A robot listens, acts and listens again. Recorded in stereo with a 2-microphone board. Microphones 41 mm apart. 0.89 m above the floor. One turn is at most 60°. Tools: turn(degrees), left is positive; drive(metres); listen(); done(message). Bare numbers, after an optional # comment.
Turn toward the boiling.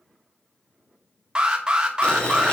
# The boiling: about 30° left or 150° left.
turn(30)
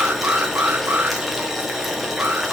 done("Facing the boiling, 1 to 2 m away.")